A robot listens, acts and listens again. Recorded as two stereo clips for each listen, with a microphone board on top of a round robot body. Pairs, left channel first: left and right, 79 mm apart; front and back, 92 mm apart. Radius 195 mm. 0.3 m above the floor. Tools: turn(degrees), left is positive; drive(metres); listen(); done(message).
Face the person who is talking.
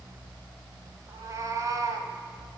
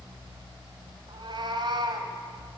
listen()
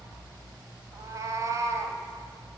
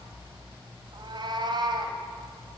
listen()
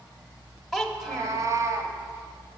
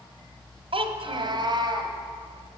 turn(degrees=180)
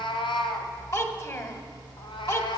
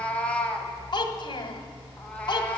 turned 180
turn(degrees=40)
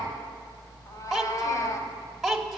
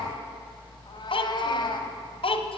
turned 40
done("Found it: a child speaking, straight ahead.")